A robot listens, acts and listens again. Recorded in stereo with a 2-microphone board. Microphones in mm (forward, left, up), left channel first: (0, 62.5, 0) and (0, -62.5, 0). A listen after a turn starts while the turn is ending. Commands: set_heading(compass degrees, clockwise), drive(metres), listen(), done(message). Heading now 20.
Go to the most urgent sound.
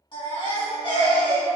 set_heading(335)
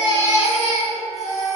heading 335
set_heading(250)
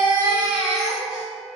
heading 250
drive(1.0)
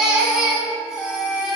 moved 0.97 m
set_heading(260)
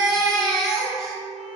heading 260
drive(1.0)
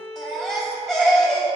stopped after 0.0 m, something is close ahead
done("I am next to the baby crying.")